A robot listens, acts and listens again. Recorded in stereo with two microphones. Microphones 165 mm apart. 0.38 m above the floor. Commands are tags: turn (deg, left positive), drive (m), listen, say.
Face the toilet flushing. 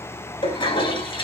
<turn deg="30"/>
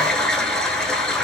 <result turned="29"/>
<say>Facing the toilet flushing, under 1 m away.</say>